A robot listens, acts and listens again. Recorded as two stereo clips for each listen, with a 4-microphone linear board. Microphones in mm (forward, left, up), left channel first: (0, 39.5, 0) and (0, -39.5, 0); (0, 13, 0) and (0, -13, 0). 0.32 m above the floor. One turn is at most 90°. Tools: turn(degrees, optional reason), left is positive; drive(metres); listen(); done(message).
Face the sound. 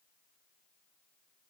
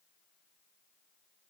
listen()
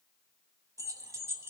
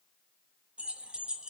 turn(degrees=-30, reason="The keys jangling: about 30° right or 150° right.")
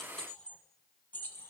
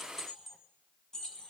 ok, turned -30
turn(degrees=25, reason="So it is at 25° left.")
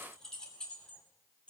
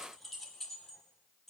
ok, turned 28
turn(degrees=15, reason="The keys jangling is now 15° left.")
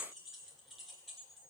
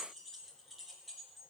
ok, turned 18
done("Facing the keys jangling.")